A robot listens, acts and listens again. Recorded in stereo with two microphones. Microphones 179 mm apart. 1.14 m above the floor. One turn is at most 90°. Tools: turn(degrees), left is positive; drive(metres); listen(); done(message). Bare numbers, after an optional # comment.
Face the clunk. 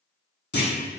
# The clunk: about 75° left or 105° left.
turn(75)
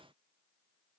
listen()
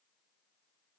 done("I heard a clunk, but can't make it out now. It was about straight ahead or 30° left.")